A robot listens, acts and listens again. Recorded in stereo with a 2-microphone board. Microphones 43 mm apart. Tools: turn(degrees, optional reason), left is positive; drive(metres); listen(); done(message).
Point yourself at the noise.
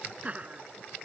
turn(degrees=-35, reason="The laughter: about 35° right or 145° right.")
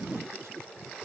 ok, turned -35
turn(degrees=-105, reason="So it is at 105° right.")
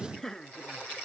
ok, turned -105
turn(degrees=10, reason="The laughter is now 10° left.")
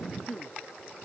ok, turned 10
done("Facing the laughter.")